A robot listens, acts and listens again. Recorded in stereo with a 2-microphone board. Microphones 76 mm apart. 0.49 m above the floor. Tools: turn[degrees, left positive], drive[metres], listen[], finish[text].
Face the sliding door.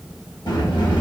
Action: turn[90]
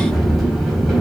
Action: finish[Found it: a sliding door, straight ahead.]